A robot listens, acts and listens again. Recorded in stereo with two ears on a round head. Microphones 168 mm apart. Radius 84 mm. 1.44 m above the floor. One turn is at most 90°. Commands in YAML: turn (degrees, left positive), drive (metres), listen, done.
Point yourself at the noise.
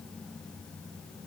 listen: true
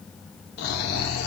turn: 60
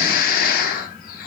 turn: 50
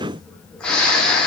done: "Found it: snoring, straight ahead."